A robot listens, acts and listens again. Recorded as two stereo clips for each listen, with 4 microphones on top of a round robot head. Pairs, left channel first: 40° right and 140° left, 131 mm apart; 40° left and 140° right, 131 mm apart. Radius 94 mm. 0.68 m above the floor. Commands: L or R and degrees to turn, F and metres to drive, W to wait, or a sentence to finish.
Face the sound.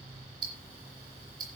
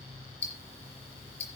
L80
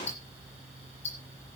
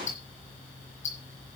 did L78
Facing the ticking, over 4 m away.